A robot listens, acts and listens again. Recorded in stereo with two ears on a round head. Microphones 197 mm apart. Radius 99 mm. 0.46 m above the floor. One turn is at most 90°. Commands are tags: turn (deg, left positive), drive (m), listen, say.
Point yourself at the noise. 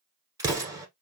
<turn deg="-15"/>
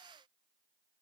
<listen/>
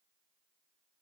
<say>I heard an explosion, but can't make it out now. It was about straight ahead or 150° right.</say>